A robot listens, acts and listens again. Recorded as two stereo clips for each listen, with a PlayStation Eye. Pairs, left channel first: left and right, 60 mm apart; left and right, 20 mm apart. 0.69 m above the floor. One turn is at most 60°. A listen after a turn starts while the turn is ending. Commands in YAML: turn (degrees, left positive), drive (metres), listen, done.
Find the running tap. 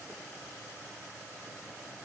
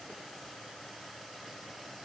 listen: true
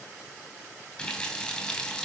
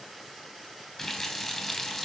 turn: 20
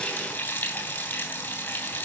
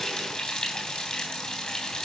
turn: 60
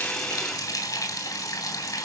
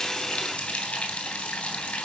turn: 60
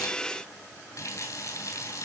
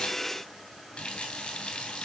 turn: 60
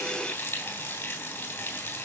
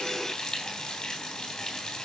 turn: 30
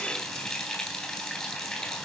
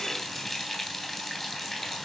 done: "Found it: a running tap, straight ahead."